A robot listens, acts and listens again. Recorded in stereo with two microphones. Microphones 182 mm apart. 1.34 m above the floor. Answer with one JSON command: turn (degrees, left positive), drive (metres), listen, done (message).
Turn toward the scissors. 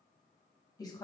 {"listen": true}
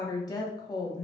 {"listen": true}
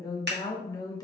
{"turn": -65}
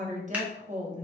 {"listen": true}
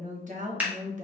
{"turn": -10}
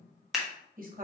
{"done": "Facing the scissors, 1 to 2 m away."}